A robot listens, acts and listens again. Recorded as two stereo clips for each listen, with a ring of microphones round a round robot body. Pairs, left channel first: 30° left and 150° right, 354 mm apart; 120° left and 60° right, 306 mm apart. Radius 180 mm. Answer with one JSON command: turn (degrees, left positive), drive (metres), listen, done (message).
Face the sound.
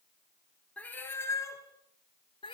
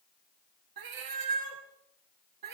{"turn": -45}
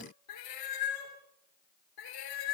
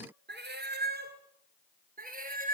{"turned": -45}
{"done": "Found it: a cat meowing, straight ahead."}